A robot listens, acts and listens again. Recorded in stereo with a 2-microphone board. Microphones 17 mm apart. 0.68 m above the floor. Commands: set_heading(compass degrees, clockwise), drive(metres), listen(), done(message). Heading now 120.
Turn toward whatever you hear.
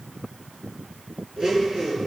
set_heading(185)
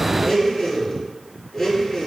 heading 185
done("Facing the blender.")